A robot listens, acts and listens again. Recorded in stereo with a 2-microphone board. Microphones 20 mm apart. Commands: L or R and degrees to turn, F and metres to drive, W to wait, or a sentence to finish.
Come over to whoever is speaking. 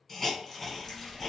R55
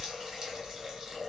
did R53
R60
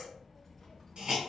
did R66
F1.0
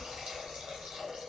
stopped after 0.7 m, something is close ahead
L10
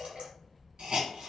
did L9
Arrived at the child speaking, straight ahead.